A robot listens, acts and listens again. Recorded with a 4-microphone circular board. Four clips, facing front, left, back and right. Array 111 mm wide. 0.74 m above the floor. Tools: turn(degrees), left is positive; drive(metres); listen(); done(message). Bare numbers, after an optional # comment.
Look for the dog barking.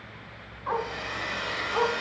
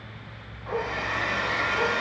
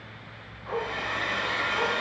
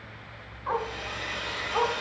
# The dog barking: 60° right.
turn(-60)
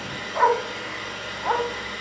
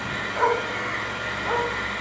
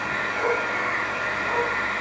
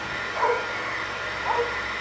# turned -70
# The dog barking is now 20° right.
turn(-20)
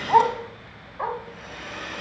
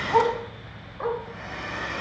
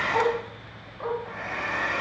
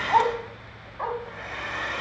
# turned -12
# The dog barking is now 30° right.
turn(-30)
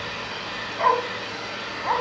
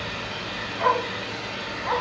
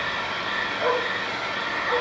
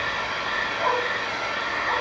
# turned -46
done("Found it: a dog barking, straight ahead, 2 to 4 m away.")